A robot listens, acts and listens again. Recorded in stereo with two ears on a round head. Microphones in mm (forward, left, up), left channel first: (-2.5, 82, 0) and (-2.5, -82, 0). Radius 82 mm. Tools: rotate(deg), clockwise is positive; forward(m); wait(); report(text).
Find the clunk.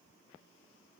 wait()
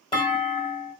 rotate(-25)
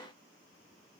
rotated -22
wait()
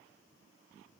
report("I heard a clunk, but can't make it out now. It was about 5° left or 130° left.")